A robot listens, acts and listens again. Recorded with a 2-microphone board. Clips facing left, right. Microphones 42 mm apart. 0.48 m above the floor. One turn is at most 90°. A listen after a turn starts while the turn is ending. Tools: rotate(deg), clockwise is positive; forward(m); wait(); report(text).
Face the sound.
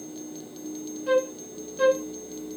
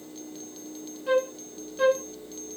rotate(-30)
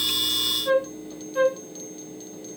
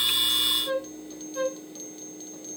rotate(-90)
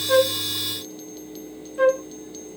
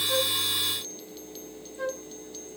rotate(-90)
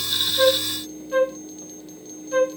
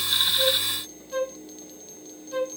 rotate(-30)
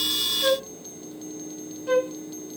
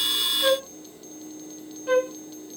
rotate(10)
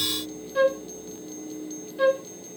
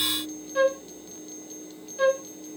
report("Facing the flute.")